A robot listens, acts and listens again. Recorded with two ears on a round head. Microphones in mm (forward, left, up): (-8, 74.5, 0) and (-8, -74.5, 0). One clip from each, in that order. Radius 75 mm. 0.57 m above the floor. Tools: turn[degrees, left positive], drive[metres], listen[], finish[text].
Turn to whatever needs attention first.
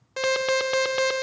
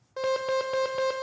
Thought: The alarm: about 60° left or 120° left.
Action: turn[60]
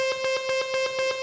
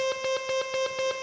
Thought: So it is at 10° left.
Action: turn[10]
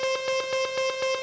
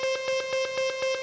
Action: finish[Found it: an alarm, straight ahead.]